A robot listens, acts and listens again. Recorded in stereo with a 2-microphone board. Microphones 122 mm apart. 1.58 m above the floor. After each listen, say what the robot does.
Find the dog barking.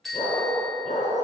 Turn 70° left.
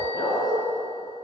Turn 35° left.
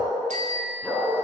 Turn 10° left.
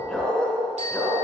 Turn 10° left.
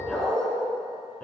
Turn 10° left.
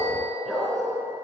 Found it: a dog barking, straight ahead, over 4 m away.